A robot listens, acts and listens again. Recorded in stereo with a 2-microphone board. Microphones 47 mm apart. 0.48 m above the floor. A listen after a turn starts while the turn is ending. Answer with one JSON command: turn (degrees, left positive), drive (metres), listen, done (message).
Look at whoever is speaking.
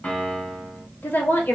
{"turn": 55}
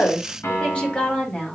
{"turn": 20}
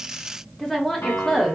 {"done": "Facing the woman speaking."}